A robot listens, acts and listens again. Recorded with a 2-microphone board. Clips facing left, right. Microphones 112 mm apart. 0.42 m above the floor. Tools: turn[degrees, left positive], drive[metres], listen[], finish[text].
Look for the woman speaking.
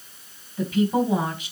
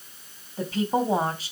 Thought: The woman speaking: about 35° right or 145° right.
Action: turn[-35]
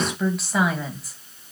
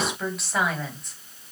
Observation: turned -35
Action: finish[Facing the woman speaking.]